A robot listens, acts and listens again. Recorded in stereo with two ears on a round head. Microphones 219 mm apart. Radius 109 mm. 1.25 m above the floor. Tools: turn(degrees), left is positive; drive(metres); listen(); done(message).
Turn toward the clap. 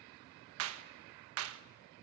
turn(degrees=-65)
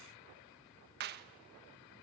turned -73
turn(degrees=-45)
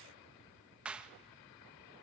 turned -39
done("Found it: a clap, straight ahead.")